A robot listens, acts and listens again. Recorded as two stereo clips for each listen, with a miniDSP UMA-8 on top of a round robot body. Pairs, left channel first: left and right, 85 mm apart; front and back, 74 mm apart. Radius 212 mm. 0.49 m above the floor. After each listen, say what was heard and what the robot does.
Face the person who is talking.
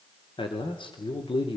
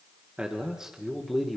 The man speaking: 90° left. Turn 90° left.
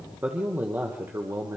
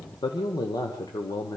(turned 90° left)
The man speaking is now 30° right. Turn 30° right.
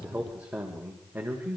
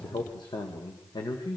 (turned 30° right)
The man speaking is now 20° right. Turn 20° right.
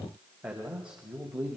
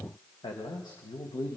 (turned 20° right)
The man speaking is now 15° right. Turn 15° right.
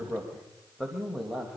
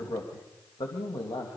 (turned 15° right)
Facing the man speaking, 2 to 4 m away.